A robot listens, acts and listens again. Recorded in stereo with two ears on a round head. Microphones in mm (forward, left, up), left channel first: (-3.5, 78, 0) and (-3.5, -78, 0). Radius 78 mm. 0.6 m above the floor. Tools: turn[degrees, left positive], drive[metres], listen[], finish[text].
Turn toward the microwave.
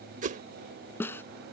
Action: listen[]
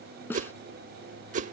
Action: listen[]
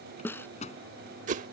Thought: The microwave: about 40° left or 140° left.
Action: turn[40]
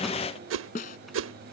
Action: finish[Facing the microwave.]